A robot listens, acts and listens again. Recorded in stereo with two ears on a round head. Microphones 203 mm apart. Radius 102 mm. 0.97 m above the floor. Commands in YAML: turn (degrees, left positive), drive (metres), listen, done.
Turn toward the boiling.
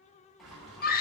turn: 30
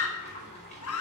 turn: 145
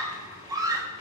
turn: 25
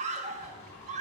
turn: 10
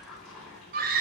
done: "Facing the boiling, over 4 m away."